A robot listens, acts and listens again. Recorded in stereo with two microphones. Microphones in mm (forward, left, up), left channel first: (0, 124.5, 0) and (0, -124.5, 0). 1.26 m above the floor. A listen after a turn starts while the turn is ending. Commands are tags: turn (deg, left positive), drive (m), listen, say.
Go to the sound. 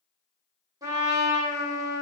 <turn deg="-30"/>
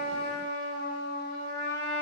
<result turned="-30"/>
<turn deg="-135"/>
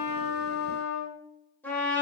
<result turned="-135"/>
<turn deg="10"/>
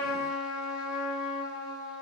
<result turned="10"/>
<drive m="1.0"/>
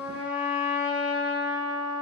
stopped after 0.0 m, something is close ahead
<say>Blocked. The trumpet is further on, straight ahead.</say>